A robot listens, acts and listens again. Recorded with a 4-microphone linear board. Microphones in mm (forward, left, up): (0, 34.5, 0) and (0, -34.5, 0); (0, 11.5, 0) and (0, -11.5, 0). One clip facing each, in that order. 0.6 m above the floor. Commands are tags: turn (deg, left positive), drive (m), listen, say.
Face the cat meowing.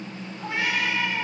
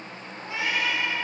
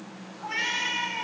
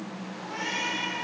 <turn deg="40"/>
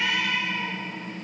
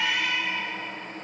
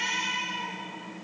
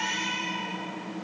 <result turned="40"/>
<turn deg="-10"/>
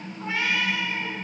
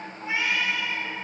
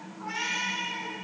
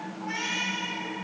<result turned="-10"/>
<turn deg="-25"/>
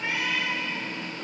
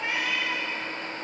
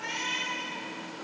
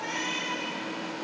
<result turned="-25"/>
<turn deg="-10"/>
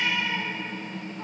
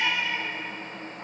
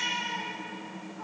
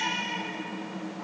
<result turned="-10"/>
<say>Found it: a cat meowing, straight ahead, 2 to 4 m away.</say>